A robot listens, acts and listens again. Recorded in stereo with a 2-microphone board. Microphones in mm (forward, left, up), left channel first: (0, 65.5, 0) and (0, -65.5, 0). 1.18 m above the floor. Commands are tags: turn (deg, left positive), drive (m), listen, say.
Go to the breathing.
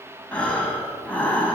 <turn deg="30"/>
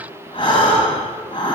<turn deg="140"/>
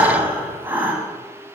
<turn deg="-15"/>
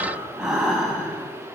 <drive m="1.0"/>
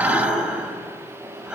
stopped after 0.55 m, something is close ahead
<say>Something is in my way. I am facing the breathing but have not reached it.</say>